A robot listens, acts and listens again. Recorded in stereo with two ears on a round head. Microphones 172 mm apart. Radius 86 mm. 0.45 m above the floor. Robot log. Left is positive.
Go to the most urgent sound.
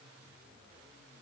cmd idle
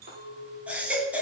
cmd yaw -30
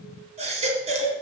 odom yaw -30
note: So it is at 145° right.
cmd yaw -145
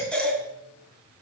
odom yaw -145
cmd fwd 1.0
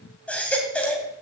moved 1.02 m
cmd fwd 1.0
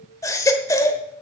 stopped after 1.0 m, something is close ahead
note: The baby crying is now 20° left.
cmd yaw +20
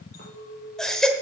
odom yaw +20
end: Arrived at the baby crying, straight ahead.